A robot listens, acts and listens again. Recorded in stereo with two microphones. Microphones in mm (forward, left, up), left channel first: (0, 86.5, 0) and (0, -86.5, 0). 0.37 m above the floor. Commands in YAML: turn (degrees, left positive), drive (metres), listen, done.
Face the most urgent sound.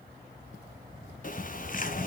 listen: true
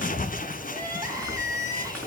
turn: -20
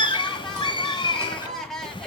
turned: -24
done: "Facing the crying."